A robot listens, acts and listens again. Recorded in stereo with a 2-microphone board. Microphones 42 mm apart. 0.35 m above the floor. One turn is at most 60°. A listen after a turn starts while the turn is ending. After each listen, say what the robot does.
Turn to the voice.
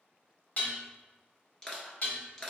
Keep listening.
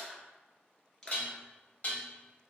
Keep listening.
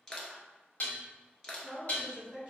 Turn 30° right.
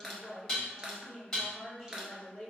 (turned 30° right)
Facing the woman speaking.